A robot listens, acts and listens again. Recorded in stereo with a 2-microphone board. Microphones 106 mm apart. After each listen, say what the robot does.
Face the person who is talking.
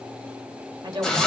Turn 45° right.
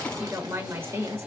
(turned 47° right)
Turn 25° right.
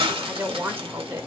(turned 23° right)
Turn 25° right.
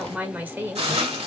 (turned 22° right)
Turn 20° right.
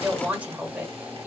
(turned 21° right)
Turn 20° right.
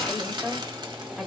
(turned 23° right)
Found it: a woman speaking, straight ahead, 1 to 2 m away.